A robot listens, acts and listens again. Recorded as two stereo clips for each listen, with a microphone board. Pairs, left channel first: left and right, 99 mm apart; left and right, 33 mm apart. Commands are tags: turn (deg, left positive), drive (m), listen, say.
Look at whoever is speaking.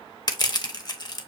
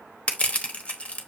<listen/>
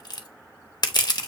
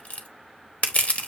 <listen/>
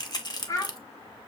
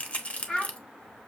<turn deg="35"/>
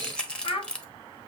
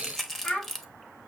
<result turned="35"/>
<turn deg="105"/>
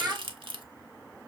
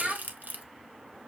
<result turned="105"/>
<turn deg="-20"/>
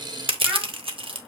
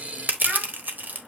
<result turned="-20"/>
<listen/>
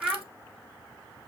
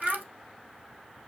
<turn deg="-10"/>
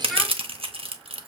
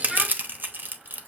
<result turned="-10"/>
<listen/>
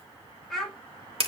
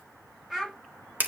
<say>Found it: a child speaking, straight ahead.</say>